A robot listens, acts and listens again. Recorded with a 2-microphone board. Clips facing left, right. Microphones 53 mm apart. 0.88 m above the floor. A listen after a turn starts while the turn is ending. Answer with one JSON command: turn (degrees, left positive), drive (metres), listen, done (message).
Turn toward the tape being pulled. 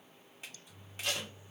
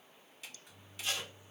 {"turn": 90}
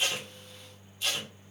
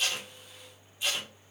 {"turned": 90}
{"turn": -15}
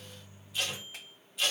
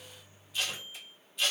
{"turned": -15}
{"done": "Facing the tape being pulled, 1 to 2 m away."}